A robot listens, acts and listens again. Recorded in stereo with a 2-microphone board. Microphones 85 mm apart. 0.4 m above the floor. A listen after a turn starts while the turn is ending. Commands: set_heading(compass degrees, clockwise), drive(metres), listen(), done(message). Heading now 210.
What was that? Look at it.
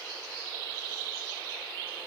listen()
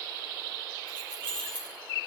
set_heading(180)
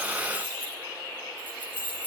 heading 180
set_heading(200)
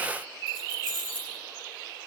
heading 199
done("Found it: keys jangling, straight ahead.")